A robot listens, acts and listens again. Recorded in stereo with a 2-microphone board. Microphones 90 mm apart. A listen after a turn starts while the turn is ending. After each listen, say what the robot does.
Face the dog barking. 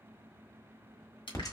Keep listening.
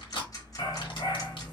Turn 70° left.
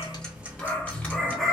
Found it: a dog barking, straight ahead.